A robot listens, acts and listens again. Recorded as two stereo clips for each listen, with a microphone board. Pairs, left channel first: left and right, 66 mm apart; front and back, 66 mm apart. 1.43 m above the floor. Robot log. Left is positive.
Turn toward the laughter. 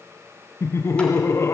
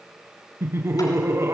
note: The laughter: 135° left.
cmd yaw +135
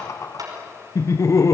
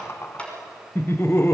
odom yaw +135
note: The laughter is now 50° left.
cmd yaw +50
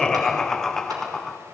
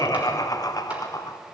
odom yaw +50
end: Found it: laughter, straight ahead, under 1 m away.